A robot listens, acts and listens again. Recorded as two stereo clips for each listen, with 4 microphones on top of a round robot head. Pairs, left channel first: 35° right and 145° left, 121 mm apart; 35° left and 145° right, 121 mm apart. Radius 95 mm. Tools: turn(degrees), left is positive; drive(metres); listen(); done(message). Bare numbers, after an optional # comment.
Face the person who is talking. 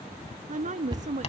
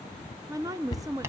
# The woman speaking: 155° left.
turn(155)
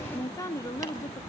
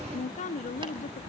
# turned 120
# The woman speaking is now 30° left.
turn(30)
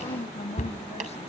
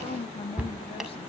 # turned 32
done("Facing the woman speaking.")